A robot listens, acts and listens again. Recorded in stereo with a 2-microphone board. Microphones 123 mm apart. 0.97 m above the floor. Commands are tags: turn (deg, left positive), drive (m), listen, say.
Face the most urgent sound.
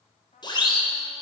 <turn deg="40"/>
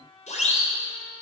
<turn deg="100"/>
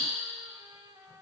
<listen/>
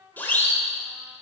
<turn deg="15"/>
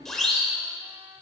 <say>Facing the siren.</say>